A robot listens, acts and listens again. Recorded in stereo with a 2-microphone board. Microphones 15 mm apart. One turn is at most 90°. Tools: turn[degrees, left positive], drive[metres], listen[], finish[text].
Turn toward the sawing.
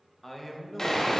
Thought: The sawing: about 40° left or 140° left.
Action: turn[40]
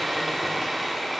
Thought: So it is at 10° left.
Action: turn[10]
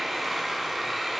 Action: finish[Found it: sawing, straight ahead, under 1 m away.]